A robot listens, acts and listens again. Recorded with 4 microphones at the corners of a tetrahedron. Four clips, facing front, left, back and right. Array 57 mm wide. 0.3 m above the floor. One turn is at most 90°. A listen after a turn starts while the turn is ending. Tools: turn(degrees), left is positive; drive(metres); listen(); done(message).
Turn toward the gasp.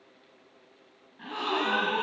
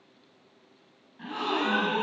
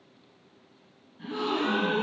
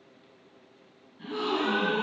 turn(degrees=40)
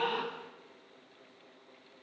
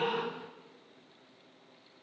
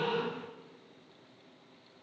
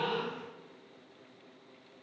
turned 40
done("Facing where the gasp came from. I can't hear it now.")